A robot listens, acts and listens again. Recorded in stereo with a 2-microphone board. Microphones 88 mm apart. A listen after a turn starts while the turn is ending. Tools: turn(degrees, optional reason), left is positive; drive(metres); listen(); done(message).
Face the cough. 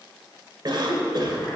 turn(degrees=-55, reason="The cough: about 55° right or 125° right.")
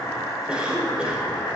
turn(degrees=-15, reason="So it is at 15° right.")
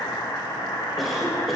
done("Facing the cough.")